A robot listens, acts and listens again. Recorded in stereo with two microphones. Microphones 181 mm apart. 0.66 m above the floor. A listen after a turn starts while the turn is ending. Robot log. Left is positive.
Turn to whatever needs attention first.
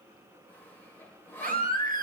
note: The baby crying: about 55° right or 125° right.
cmd yaw -55
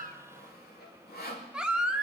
end: Facing the baby crying, under 1 m away.